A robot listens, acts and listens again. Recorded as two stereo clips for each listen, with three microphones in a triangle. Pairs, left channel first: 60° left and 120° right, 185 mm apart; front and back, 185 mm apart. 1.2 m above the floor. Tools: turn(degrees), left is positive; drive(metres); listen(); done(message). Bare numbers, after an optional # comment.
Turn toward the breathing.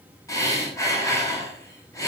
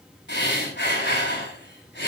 # The breathing: 15° right.
turn(-15)
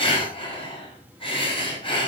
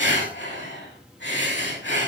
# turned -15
done("Found it: breathing, straight ahead.")